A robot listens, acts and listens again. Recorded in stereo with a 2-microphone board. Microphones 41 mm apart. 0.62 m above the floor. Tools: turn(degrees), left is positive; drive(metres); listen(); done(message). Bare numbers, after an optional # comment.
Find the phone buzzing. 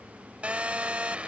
# The phone buzzing: about 35° right or 145° right.
turn(-35)
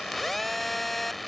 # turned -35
done("Found it: a phone buzzing, straight ahead.")